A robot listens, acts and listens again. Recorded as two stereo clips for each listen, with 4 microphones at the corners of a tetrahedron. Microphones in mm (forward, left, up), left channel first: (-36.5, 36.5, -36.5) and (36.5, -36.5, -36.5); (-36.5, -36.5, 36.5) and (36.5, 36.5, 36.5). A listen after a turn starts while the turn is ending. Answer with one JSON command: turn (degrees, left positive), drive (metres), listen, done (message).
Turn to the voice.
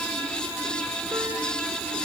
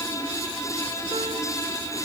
{"listen": true}
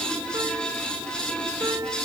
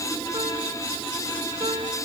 {"listen": true}
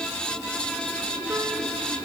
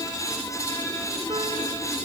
{"done": "I can't make out anyone speaking to turn to."}